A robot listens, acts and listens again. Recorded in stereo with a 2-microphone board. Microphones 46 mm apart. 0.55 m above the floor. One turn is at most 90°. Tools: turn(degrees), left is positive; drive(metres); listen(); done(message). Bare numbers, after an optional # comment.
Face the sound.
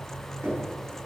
turn(-90)
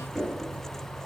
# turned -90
# So it is at 10° right.
turn(-10)
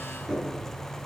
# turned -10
done("Found it: knocking, straight ahead.")